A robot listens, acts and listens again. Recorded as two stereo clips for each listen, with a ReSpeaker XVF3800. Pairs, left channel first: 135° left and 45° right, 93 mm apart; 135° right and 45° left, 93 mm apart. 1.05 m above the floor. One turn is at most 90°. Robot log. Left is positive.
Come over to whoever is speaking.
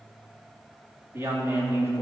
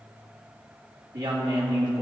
note: The woman speaking: 15° left.
cmd yaw +15
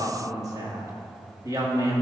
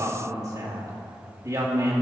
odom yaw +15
cmd fwd 1.0
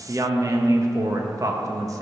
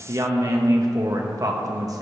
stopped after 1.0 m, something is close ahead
end: Arrived at the woman speaking, straight ahead.